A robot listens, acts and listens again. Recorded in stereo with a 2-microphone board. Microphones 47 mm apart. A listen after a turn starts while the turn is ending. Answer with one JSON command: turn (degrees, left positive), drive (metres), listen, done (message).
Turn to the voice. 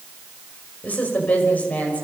{"turn": 35}
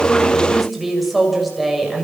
{"done": "Found it: a woman speaking, straight ahead, over 4 m away."}